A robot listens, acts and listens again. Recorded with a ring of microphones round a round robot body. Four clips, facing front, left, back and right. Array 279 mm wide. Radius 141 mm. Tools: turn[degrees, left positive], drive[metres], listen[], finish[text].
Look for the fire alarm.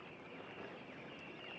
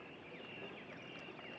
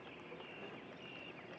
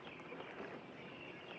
Action: listen[]
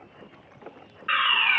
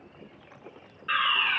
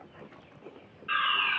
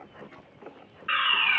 Thought: The fire alarm: 15° right.
Action: turn[-15]
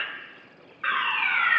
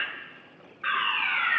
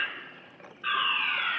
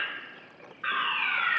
Action: finish[Facing the fire alarm.]